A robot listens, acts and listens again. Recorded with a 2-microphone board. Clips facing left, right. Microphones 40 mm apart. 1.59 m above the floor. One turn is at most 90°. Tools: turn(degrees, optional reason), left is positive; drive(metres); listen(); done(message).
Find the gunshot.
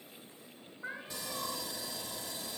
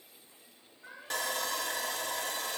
listen()
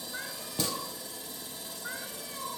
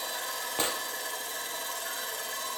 turn(degrees=-35, reason="The gunshot: about 35° right or 145° right.")
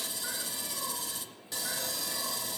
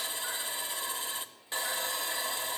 listen()
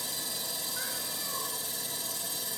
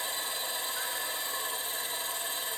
done("I heard a gunshot, but can't make it out now. It was about straight ahead or 110° right.")